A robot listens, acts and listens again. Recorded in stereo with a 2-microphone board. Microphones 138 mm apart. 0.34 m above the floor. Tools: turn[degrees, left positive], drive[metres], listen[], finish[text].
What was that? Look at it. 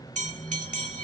Thought: The bell: about 60° right or 120° right.
Action: turn[-60]
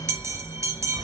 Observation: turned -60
Thought: So it is at 25° right.
Action: turn[-25]
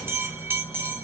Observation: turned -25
Thought: The bell is now 20° right.
Action: turn[-20]
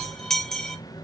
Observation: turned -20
Action: finish[Facing the bell.]